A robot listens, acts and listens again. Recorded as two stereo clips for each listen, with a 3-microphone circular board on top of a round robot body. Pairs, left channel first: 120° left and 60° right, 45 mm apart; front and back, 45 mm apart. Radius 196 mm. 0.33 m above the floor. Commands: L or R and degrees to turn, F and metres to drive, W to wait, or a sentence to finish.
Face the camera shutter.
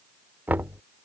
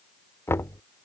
W
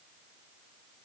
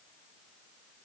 W
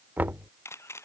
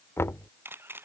L145
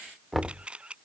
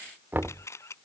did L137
Facing the camera shutter.